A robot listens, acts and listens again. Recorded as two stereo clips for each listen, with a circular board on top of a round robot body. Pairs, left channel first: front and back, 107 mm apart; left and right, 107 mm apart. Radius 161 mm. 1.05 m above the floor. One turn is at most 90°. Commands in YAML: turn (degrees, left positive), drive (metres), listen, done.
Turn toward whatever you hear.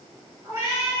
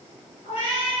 turn: 90
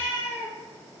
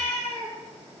turn: 65
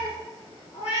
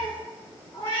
turn: 30
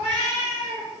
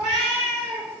done: "Facing the cat meowing."